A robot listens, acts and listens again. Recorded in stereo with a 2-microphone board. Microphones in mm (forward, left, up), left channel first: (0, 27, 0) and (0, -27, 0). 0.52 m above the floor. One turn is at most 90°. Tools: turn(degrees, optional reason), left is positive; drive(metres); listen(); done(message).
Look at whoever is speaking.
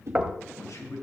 turn(degrees=70, reason="The man speaking: about 70° left or 110° left.")
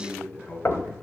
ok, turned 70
turn(degrees=35, reason="So it is at 35° left.")
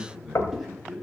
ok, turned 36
done("Found it: a man speaking, straight ahead.")